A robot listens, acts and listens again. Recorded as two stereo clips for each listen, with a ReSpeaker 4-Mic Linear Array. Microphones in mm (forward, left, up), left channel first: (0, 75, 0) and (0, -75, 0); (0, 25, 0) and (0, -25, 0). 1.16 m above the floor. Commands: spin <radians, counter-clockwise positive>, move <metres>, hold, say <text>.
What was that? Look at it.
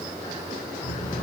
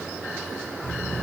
spin 0.96
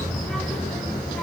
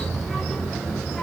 say Found it: a child speaking, straight ahead.